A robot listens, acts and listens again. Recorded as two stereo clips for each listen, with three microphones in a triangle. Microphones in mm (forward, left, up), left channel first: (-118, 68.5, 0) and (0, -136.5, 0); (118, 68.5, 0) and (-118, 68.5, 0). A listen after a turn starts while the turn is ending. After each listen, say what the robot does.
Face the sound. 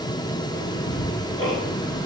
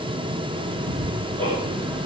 Turn 110° left.
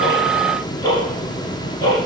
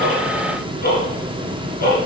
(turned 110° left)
Turn 50° left.
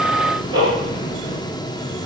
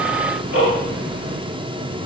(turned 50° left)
Turn 10° left.
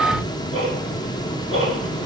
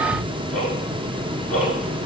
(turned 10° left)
Found it: ticking, straight ahead.